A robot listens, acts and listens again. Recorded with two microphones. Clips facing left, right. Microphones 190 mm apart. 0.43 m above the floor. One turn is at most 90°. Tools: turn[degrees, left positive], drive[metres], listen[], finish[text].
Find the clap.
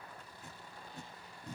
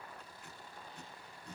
Action: listen[]
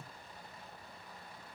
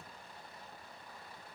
Action: listen[]
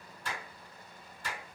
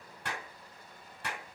Thought: The clap: about 70° right or 110° right.
Action: turn[-70]
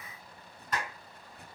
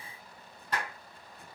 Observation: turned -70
Thought: So it is at 30° right.
Action: turn[-30]
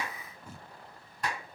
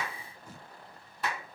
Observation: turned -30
Action: finish[Found it: a clap, straight ahead.]